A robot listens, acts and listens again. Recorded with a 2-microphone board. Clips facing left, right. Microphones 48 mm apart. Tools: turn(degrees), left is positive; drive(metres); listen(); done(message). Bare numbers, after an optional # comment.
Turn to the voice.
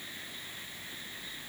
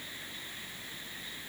listen()
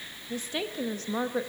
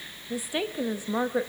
turn(-30)
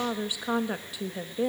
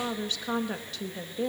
# So it is at 15° left.
turn(15)
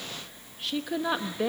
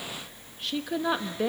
done("Found it: a woman speaking, straight ahead.")